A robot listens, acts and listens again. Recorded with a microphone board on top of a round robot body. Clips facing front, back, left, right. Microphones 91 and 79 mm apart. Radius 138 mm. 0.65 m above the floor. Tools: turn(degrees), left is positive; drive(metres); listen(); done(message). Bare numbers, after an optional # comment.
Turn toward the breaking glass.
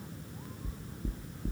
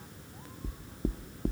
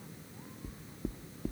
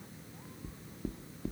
listen()
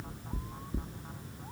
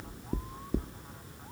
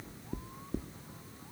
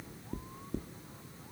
listen()
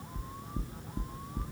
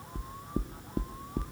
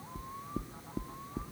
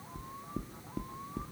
done("I can't make out breaking glass, only knocking.")